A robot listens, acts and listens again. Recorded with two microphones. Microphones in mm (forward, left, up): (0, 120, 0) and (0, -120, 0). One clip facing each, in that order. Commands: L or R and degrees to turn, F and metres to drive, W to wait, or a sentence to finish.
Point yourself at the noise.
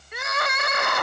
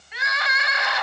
L50
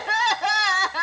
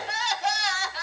L75
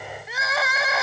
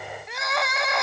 Facing the crying, under 1 m away.